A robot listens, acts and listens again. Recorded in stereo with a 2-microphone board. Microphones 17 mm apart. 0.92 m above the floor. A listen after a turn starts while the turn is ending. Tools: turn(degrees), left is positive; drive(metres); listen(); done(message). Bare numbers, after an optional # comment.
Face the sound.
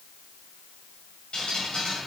# The dripping: about 65° left or 115° left.
turn(65)
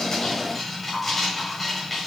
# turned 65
done("Facing the dripping.")